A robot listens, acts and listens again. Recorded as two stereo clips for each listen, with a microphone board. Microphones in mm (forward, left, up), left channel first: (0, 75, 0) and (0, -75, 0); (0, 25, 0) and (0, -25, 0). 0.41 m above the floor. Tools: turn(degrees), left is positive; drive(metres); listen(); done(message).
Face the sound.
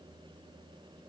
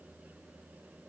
listen()
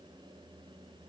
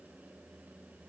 listen()
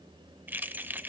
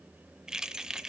turn(degrees=-30)
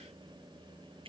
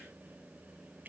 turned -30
turn(degrees=-135)
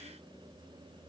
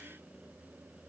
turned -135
listen()
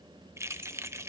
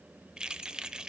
turn(degrees=-20)
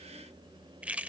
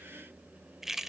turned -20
turn(degrees=-10)
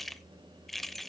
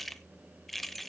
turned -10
done("Found it: keys jangling, straight ahead, under 1 m away.")